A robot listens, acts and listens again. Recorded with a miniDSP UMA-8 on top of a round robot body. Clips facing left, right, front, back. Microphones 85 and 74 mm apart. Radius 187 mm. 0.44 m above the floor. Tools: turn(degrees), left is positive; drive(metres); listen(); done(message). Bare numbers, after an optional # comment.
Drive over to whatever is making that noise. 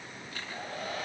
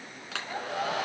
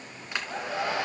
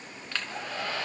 # The hair dryer: 75° right.
turn(-75)
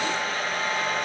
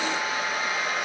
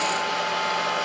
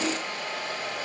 drive(1.0)
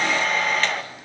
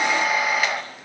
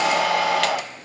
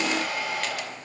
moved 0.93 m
drive(1.0)
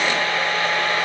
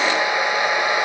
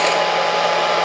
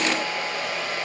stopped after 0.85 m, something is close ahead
# The hair dryer is now 15° right.
turn(-15)
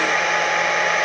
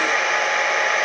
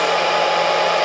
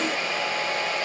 done("Arrived at the hair dryer, straight ahead.")